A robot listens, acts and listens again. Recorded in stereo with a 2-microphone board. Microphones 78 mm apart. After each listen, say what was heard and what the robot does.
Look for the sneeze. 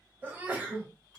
The sneeze: about 25° right or 155° right. Turn 25° right.
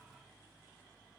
Keep listening.
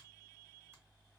I heard a sneeze, but can't make it out now. It was about straight ahead or 130° right.